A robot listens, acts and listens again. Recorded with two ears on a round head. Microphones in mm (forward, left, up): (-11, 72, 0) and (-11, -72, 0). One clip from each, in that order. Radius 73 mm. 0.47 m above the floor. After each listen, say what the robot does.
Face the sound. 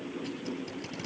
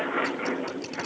Turn 35° right.
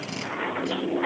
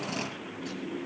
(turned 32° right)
Keep listening.
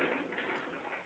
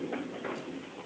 Keep listening.
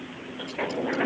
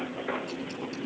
I heard tape being pulled, but can't make it out now. It was about straight ahead or 115° right.